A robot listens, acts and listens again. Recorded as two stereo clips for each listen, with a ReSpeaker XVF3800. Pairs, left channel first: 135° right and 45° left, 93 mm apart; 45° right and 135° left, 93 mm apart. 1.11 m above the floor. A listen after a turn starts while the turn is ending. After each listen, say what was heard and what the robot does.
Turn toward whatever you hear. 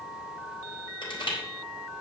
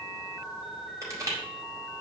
The crushing: 170° right. Turn 170° right.
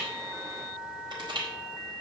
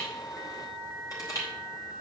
Facing the crushing, over 4 m away.